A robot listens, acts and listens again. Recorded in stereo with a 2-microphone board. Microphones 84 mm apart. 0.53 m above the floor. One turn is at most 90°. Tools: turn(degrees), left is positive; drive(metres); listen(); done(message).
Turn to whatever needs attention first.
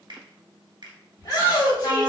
turn(degrees=50)
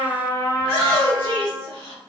turn(degrees=80)
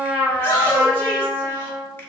turn(degrees=30)
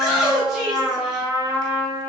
done("Facing the shout, 2 to 4 m away.")